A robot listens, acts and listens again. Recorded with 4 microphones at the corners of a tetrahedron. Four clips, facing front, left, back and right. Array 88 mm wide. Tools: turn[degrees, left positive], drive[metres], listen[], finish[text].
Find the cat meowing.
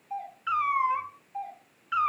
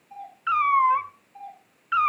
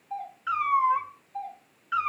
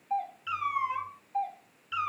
Thought: The cat meowing: 90° left.
Action: turn[90]
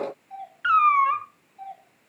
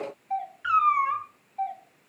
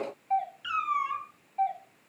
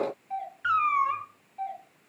Action: finish[Found it: a cat meowing, straight ahead.]